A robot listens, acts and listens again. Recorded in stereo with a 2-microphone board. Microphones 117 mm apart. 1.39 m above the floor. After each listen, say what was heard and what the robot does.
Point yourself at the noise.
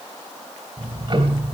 The ticking: about 45° right or 135° right. Turn 45° right.
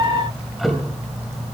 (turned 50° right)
Found it: ticking, straight ahead.